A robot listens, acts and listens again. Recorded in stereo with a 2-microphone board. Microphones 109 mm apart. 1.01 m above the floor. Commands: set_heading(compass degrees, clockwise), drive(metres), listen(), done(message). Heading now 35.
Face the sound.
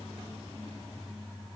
listen()
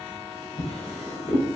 set_heading(325)
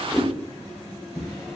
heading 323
done("Facing the drawer.")